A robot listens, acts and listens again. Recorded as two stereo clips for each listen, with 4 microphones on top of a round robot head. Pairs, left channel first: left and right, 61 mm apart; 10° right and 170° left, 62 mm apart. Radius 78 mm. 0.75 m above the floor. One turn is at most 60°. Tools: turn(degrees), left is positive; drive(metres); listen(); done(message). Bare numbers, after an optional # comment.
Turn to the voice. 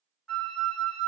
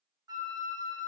listen()
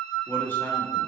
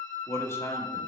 # The man speaking: 30° left.
turn(30)
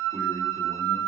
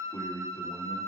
done("Facing the man speaking.")